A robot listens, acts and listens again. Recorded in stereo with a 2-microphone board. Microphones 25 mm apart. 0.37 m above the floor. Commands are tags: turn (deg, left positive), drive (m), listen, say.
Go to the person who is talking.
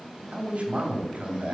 <turn deg="-60"/>
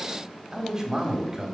<turn deg="-25"/>
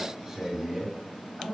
<turn deg="-20"/>
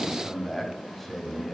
<drive m="1.0"/>
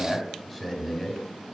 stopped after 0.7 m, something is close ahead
<say>I am next to the man speaking.</say>